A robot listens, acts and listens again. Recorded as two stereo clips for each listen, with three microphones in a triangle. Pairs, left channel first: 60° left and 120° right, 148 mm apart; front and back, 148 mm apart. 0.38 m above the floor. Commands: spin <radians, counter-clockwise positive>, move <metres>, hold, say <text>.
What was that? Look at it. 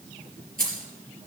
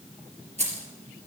spin -2.44
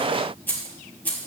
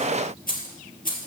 spin -0.35
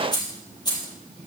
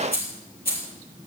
say Found it: keys jangling, straight ahead, over 4 m away.